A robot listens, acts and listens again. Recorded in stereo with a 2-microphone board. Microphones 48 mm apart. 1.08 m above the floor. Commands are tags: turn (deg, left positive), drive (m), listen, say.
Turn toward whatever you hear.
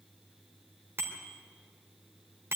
<turn deg="-55"/>
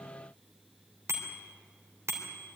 <turn deg="-70"/>
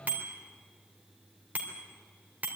<turn deg="-35"/>
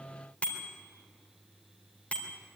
<turn deg="25"/>
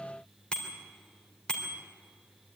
<turn deg="15"/>
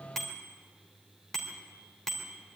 <say>Found it: a bicycle bell, straight ahead.</say>